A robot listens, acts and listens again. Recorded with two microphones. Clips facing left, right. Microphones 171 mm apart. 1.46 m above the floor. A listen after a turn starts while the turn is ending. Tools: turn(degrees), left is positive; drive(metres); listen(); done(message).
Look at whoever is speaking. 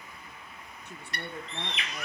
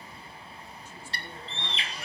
turn(degrees=65)
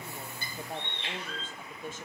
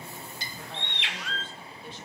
turn(degrees=45)
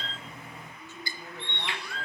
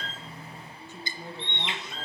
turn(degrees=-15)
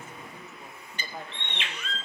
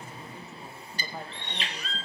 done("Found it: a woman speaking, straight ahead, 1 to 2 m away.")